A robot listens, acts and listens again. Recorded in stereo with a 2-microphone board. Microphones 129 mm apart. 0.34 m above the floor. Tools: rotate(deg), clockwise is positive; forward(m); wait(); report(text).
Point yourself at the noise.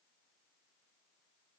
wait()
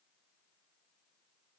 wait()
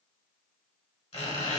rotate(-45)
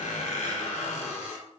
rotate(-85)
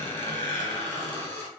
rotate(-20)
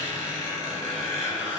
report("Facing the squeak.")